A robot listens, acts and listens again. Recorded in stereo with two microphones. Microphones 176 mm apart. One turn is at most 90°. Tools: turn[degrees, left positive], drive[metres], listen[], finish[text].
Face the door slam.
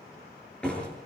Action: turn[30]
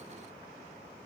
Action: listen[]
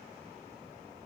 Action: finish[I heard a door slam, but can't make it out now. It was about 25° right or 145° left.]